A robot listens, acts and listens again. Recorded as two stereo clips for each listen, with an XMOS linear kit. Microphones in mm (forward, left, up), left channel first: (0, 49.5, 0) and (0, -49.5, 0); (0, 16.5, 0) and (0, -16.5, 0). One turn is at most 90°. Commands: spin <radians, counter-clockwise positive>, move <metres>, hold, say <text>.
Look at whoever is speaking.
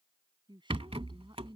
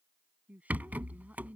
spin -0.87
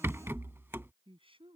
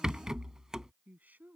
spin -1.13
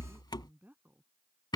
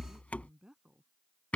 spin -0.35
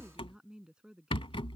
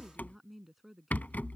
spin -0.17
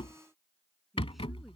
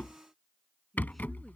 say Found it: a woman speaking, straight ahead.